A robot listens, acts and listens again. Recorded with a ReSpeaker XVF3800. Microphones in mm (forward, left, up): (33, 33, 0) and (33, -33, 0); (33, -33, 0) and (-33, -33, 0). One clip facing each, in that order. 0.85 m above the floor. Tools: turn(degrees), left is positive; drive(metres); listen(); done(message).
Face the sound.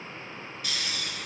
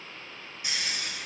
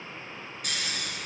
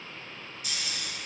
turn(degrees=-20)
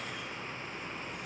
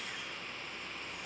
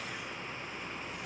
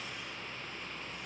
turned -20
listen()
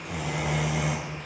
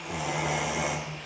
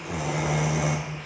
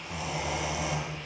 done("Facing the snoring, 2 to 4 m away.")